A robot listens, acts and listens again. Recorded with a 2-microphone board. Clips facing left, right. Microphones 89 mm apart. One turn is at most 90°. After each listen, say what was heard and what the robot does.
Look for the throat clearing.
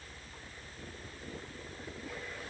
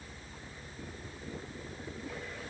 Keep listening.
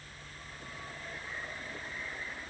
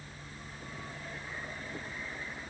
Keep listening.
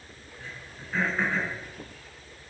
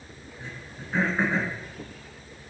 The throat clearing: about 15° right or 165° right. Turn 15° right.
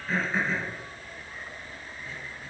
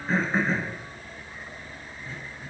So it is at 145° right. Turn 90° right.
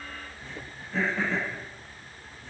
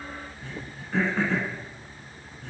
The throat clearing is now 90° right. Turn 90° right.
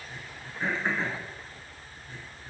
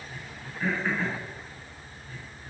The throat clearing is now 20° left. Turn 20° left.
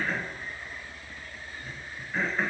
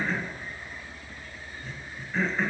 Facing the throat clearing, 1 to 2 m away.